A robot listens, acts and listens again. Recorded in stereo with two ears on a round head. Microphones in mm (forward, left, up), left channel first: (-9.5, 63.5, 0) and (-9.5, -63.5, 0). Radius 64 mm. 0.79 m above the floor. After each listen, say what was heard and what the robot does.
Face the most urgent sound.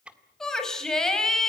Turn 30° left.
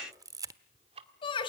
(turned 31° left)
So it is at 140° left. Turn 140° left.
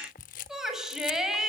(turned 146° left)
Found it: a shout, straight ahead.